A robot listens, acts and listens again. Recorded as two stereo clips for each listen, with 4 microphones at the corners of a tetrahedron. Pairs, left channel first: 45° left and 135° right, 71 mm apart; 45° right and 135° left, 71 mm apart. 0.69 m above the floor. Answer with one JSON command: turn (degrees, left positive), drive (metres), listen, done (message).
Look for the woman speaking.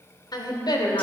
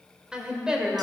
{"turn": 55}
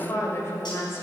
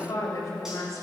{"done": "Found it: a woman speaking, straight ahead."}